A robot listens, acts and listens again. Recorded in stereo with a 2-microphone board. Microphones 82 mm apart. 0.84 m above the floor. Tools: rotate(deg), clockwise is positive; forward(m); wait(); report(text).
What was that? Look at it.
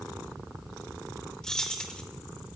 rotate(-30)
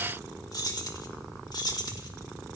rotate(-120)
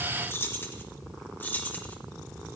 rotate(-25)
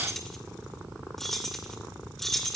report("Found it: keys jangling, straight ahead, 2 to 4 m away.")